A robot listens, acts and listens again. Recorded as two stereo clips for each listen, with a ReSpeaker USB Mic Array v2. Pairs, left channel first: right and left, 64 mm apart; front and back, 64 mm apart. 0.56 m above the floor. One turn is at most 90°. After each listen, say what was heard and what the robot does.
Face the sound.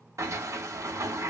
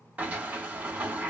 The sliding door: 115° left. Turn 90° left.
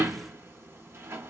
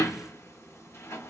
The sliding door is now 45° left. Turn 45° left.
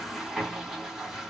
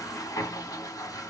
Found it: a sliding door, straight ahead, under 1 m away.